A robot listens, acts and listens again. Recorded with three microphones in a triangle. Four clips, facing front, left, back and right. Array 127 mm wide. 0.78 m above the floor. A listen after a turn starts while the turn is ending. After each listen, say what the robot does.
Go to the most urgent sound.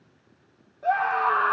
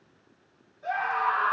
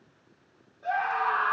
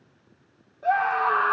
Turn 60° right.
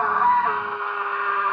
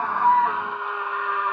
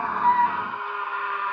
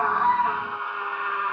Drive 1.0 m forward.
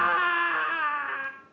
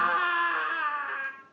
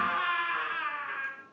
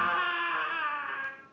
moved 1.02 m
Turn 15° left.
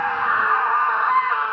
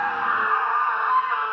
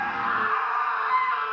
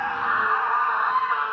Drive 1.0 m forward.
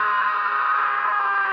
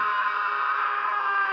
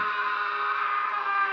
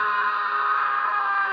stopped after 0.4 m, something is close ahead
Turn 15° right.
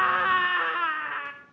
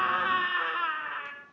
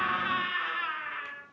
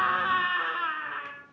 Arrived at the scream, straight ahead.